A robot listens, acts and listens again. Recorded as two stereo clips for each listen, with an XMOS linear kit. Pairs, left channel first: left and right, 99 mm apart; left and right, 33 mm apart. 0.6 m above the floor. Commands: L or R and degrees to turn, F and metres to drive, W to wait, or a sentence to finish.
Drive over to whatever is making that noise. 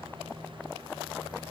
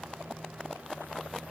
W
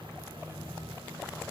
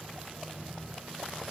W
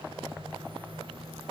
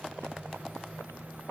I can't make out anything.